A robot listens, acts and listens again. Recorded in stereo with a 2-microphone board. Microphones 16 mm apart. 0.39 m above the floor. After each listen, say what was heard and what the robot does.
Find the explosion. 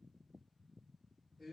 Keep listening.
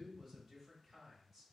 Keep listening.
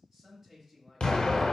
The explosion: about 60° left or 120° left. Turn 60° left.
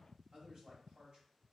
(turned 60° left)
Keep listening.
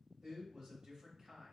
I heard an explosion, but can't make it out now. It was about straight ahead or 60° left.